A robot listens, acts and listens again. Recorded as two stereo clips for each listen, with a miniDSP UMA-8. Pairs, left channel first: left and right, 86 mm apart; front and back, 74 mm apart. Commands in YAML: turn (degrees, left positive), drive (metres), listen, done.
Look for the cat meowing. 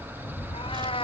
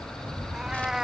turn: 95
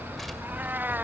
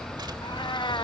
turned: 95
turn: -20
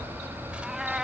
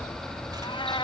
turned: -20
done: "Found it: a cat meowing, straight ahead."